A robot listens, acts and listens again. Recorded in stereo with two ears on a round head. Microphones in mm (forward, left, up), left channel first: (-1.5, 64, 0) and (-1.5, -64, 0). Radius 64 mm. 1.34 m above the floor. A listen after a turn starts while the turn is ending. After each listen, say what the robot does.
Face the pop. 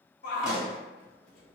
Turn 30° right.
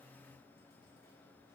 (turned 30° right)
Keep listening.
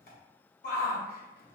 I heard a pop, but can't make it out now. It was about 25° left or 145° right.